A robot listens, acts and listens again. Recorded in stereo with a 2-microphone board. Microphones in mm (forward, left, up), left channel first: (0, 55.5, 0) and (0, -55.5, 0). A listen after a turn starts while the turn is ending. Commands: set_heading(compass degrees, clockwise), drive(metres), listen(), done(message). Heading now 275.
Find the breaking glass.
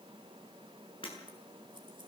set_heading(220)
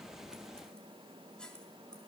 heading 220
listen()
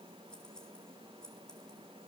done("I heard breaking glass, but can't make it out now. It was about straight ahead or 70° left.")